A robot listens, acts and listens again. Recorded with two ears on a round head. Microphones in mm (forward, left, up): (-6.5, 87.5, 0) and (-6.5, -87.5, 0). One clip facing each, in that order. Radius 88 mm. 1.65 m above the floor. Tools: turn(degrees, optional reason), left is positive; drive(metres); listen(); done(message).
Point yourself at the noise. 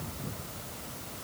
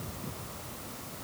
listen()
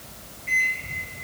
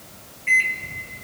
turn(degrees=-90)
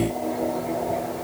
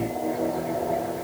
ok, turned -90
done("Facing the microwave, 1 to 2 m away.")